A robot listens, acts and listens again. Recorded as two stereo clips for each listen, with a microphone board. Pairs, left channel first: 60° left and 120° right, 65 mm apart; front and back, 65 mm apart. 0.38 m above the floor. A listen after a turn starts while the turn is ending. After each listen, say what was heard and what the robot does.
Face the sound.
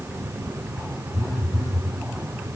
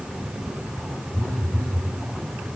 The phone buzzing: 70° left. Turn 70° left.
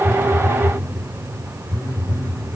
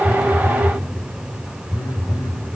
The phone buzzing is now 15° left. Turn 15° left.
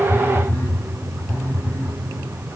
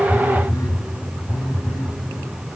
Found it: a phone buzzing, straight ahead.